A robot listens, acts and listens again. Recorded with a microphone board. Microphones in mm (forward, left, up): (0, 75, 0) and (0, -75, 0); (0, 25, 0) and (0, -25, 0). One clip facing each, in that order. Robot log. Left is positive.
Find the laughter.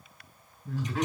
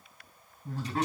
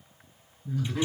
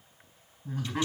note: The laughter: about 40° right or 140° right.
cmd yaw -40
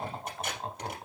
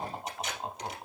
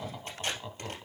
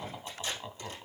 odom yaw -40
end: Facing the laughter.